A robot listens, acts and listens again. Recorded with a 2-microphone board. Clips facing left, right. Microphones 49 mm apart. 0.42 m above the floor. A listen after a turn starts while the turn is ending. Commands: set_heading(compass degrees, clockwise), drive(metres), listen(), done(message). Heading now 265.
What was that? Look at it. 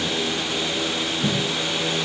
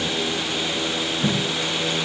set_heading(330)
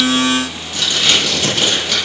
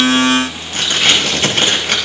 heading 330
set_heading(20)
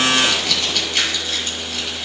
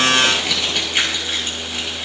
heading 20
set_heading(40)
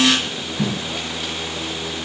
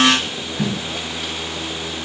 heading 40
done("Found it: tape being pulled, straight ahead, over 4 m away.")